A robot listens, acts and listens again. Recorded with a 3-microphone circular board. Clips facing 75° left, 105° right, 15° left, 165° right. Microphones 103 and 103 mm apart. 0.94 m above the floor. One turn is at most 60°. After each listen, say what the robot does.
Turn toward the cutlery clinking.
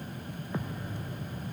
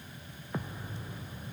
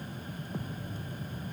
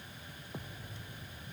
Keep listening.
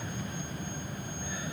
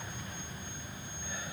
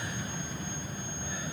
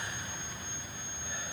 Keep listening.
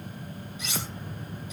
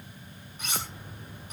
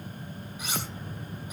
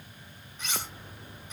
Turn 60° right.
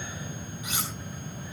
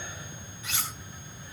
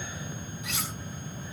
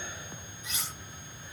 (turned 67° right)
Facing the cutlery clinking, over 4 m away.